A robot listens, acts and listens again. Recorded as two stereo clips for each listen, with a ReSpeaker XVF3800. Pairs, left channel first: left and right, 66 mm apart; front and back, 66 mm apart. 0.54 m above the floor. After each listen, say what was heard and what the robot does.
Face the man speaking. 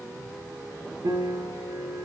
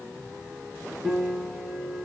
Keep listening.
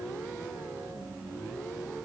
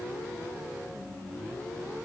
Keep listening.
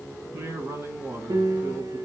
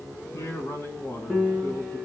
The man speaking: 55° right. Turn 55° right.
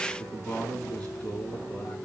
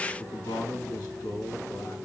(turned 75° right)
The man speaking is now 15° left. Turn 15° left.
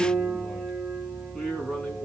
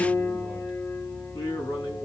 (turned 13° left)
Facing the man speaking, over 4 m away.